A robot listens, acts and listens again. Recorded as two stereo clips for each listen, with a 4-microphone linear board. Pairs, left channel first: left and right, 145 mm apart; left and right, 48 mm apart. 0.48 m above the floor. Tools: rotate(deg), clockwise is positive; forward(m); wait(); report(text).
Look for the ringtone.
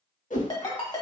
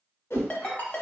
rotate(-35)
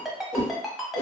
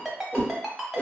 report("Facing the ringtone, 1 to 2 m away.")